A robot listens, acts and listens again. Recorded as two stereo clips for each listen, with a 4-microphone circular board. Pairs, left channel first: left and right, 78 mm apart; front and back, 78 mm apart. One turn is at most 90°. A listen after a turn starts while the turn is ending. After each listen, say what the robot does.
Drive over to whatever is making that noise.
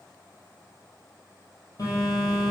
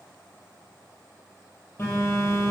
Turn 55° left.
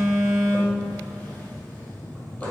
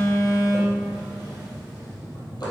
Turn 25° left.
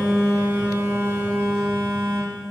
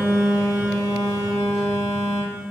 Turn 20° right.
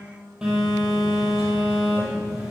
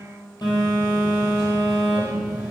Drive 1.0 m forward.
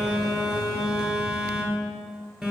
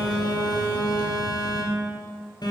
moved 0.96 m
Drive 1.0 m forward.
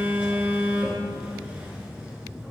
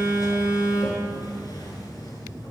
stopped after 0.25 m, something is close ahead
Turn 10° right.
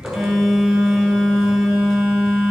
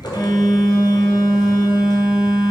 Arrived at the phone buzzing, straight ahead.